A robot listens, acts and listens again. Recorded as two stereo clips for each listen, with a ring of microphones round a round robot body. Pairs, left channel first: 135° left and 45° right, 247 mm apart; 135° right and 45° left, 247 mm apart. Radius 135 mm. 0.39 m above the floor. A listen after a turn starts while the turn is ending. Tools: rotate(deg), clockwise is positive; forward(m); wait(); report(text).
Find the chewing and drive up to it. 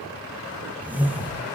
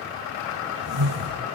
wait()
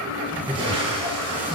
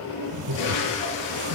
wait()
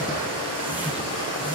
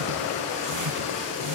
report("I can't make out chewing to turn to.")